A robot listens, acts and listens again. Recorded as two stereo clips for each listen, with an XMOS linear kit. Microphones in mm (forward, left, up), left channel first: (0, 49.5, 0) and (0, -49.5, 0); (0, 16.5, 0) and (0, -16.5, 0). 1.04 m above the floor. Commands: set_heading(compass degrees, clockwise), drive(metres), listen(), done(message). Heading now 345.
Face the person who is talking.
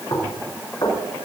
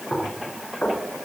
listen()
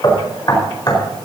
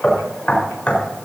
listen()
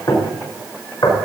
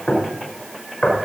done("I can't make out anyone speaking, only knocking.")